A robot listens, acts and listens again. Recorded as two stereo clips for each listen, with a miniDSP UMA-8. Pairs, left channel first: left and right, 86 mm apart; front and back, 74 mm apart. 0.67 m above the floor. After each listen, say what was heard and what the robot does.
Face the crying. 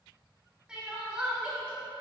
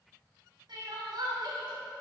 The crying: 170° right. Turn 170° right.
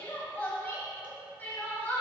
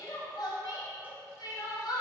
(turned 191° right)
The crying is now 20° left. Turn 20° left.
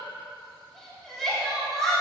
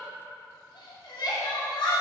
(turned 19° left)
Facing the crying.